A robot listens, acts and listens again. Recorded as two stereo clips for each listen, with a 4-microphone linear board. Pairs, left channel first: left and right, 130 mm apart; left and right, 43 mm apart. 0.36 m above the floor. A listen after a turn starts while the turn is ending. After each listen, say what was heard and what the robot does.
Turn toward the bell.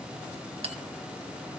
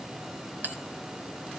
The bell: about 55° right or 125° right. Turn 55° right.
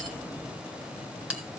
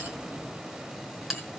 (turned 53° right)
So it is at 10° right. Turn 10° right.
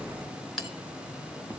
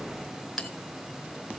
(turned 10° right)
Facing the bell, 2 to 4 m away.